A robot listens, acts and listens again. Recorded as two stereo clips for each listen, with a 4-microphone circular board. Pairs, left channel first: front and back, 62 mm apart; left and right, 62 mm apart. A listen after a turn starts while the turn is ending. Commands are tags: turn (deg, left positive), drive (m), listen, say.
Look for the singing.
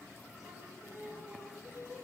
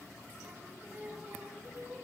<turn deg="-145"/>
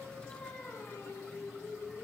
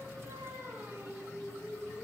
<turn deg="-50"/>
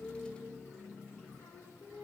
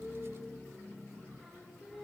<turn deg="-10"/>
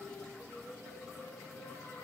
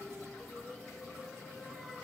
<say>Found it: singing, straight ahead.</say>